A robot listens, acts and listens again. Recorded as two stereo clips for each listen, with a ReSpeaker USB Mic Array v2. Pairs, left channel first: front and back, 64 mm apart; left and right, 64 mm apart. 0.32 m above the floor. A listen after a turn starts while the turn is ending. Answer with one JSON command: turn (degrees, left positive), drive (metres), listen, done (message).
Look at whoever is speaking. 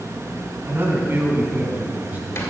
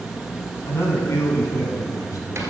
{"turn": 120}
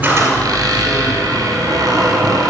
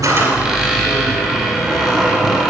{"listen": true}
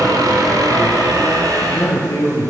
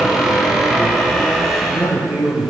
{"turn": -35}
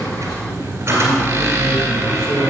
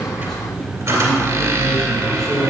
{"turn": 10}
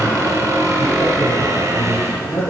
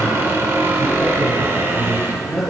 {"done": "Found it: a man speaking, straight ahead, over 4 m away."}